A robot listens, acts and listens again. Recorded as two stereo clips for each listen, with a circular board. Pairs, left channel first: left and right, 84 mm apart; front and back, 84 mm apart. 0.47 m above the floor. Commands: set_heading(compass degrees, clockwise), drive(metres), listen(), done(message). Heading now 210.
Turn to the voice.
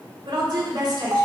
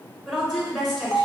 set_heading(295)
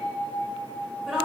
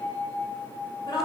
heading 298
done("Found it: a woman speaking, straight ahead.")